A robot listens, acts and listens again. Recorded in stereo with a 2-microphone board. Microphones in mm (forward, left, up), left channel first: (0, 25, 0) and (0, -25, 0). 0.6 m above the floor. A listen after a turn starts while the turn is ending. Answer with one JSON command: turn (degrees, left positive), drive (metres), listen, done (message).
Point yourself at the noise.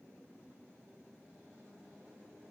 {"listen": true}
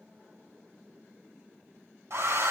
{"turn": -65}
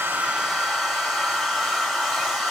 {"done": "Facing the hair dryer."}